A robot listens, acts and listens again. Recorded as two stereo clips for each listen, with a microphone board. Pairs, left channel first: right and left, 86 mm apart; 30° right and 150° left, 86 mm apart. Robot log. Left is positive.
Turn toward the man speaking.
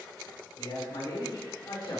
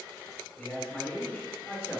note: The man speaking: 90° right.
cmd yaw -90
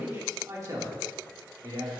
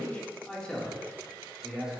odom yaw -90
note: The man speaking is now 70° left.
cmd yaw +70
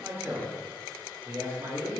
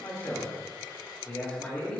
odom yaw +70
note: The man speaking is now 45° left.
cmd yaw +45
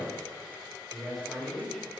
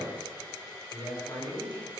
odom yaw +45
end: Facing the man speaking, 2 to 4 m away.